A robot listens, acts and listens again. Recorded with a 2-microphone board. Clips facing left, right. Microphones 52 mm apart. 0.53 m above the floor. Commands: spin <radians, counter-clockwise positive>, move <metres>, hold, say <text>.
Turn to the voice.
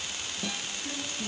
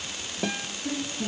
spin -0.52
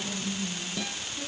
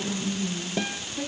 spin -2.27
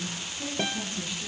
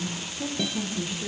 spin -0.44
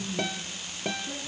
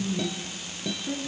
spin -0.26
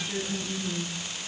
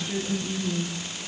say Found it: a woman speaking, straight ahead.